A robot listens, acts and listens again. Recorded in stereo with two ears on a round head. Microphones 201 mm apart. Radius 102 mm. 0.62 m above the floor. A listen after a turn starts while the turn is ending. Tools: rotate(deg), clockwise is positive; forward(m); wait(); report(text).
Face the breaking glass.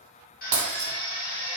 rotate(65)
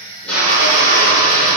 wait()
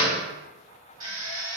report("I heard breaking glass, but can't make it out now. It was about straight ahead or 50° right.")